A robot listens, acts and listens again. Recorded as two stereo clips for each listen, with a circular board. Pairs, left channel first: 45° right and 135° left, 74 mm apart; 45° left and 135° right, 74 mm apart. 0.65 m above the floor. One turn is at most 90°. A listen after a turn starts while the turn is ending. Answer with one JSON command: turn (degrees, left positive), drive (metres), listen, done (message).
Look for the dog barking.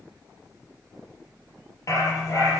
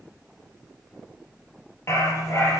{"done": "Facing the dog barking."}